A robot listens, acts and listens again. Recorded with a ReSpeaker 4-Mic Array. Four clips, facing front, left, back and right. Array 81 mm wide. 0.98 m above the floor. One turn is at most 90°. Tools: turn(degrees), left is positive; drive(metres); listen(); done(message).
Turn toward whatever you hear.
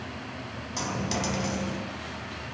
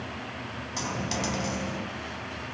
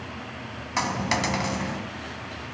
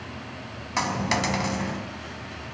turn(degrees=-90)
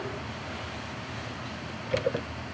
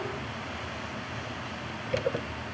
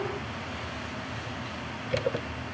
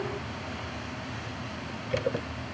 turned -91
turn(degrees=-45)
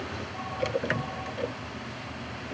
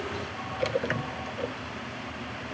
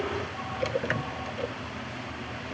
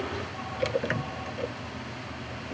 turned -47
done("Facing where the dropped coin came from. I can't hear it now.")